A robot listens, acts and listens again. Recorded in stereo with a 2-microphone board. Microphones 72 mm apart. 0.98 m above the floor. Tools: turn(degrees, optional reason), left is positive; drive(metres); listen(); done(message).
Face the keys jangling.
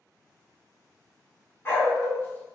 listen()
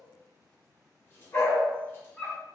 listen()
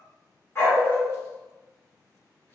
done("I can't make out keys jangling, only a dog barking.")